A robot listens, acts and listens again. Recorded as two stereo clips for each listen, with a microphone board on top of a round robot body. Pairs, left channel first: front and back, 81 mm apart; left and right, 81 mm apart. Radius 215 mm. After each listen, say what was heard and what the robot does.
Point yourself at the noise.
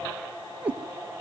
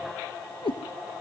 The cat meowing: 105° left. Turn 105° left.
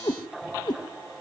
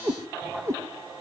The cat meowing is now 35° right. Turn 35° right.
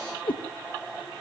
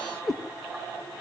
Found it: a cat meowing, straight ahead.